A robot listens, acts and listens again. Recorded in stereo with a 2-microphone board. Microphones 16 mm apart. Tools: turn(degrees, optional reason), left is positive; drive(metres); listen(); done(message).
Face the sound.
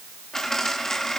turn(degrees=30, reason="The dropped coin: about 30° left or 150° left.")
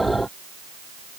listen()
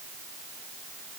done("I heard a dropped coin, but can't make it out now. It was about straight ahead or 120° left.")